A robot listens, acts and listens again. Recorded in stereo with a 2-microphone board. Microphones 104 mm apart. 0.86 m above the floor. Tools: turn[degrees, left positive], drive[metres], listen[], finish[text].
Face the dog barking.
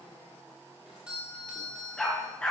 Action: turn[30]
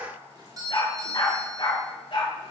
Thought: So it is at 125° left.
Action: turn[125]
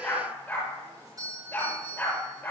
Thought: The dog barking is now 15° left.
Action: turn[15]
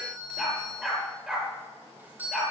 Action: finish[Found it: a dog barking, straight ahead.]